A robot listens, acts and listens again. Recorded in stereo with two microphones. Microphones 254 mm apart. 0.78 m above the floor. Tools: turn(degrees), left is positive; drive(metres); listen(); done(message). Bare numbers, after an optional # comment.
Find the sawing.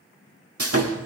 # The sawing: about 60° right or 120° right.
turn(-60)
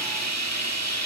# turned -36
# So it is at 80° right.
turn(-80)
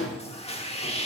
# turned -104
# The sawing is now 25° left.
turn(25)
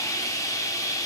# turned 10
# The sawing is now 10° left.
turn(10)
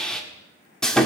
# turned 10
done("Found it: sawing, straight ahead, 1 to 2 m away.")